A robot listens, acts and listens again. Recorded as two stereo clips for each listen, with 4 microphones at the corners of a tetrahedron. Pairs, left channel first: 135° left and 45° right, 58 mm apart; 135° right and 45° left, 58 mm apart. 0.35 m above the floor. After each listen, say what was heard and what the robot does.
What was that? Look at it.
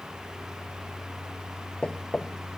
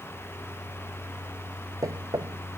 The knocking: 60° left. Turn 60° left.
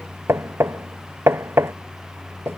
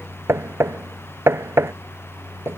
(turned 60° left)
Found it: knocking, straight ahead.